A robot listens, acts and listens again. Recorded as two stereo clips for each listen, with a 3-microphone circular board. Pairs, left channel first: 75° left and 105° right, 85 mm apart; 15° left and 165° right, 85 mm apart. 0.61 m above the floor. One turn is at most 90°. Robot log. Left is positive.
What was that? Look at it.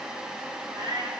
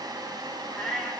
note: The cat meowing: 70° right.
cmd yaw -70
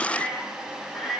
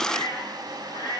note: The cat meowing is now 20° right.
cmd yaw -20
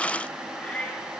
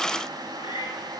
end: Found it: a cat meowing, straight ahead, 2 to 4 m away.